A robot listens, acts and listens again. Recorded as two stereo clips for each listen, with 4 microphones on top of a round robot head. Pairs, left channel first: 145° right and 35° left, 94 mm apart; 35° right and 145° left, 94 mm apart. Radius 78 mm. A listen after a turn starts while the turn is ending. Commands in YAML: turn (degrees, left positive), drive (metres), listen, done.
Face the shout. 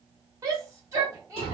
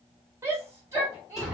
turn: 85
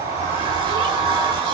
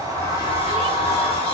listen: true
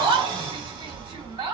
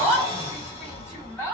turn: 25
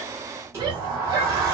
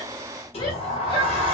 listen: true
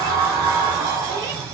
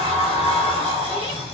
listen: true
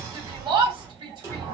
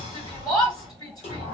done: "Found it: a shout, straight ahead."